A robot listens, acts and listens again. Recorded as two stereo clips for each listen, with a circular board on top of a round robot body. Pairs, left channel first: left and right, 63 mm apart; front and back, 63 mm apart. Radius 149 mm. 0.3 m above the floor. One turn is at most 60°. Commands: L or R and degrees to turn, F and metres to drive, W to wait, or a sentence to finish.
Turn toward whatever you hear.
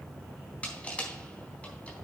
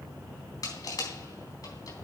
L20
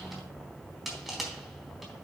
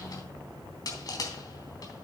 Facing the crushing, 2 to 4 m away.